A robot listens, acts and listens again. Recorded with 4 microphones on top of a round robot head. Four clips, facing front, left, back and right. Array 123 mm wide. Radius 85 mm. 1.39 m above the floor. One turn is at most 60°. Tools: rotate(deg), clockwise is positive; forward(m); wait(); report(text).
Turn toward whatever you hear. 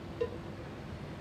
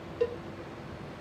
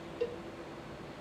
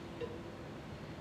rotate(-60)
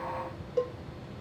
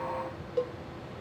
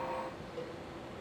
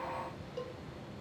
rotate(-30)
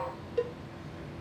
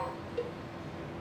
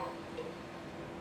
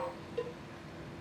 report("Found it: a cowbell, straight ahead, under 1 m away.")